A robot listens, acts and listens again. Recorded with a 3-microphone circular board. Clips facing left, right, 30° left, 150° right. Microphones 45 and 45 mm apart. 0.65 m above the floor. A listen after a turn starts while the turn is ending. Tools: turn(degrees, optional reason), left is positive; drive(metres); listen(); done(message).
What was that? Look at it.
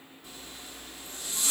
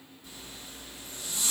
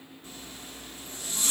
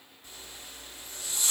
turn(degrees=65, reason="The zipper: 65° left.")
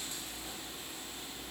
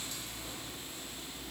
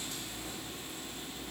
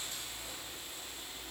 done("Found it: a zipper, straight ahead.")